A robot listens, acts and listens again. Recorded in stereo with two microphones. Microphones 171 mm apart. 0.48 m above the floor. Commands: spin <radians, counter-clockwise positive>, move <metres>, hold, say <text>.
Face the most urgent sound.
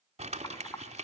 hold
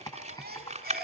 spin -1.05
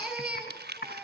say Facing the baby crying.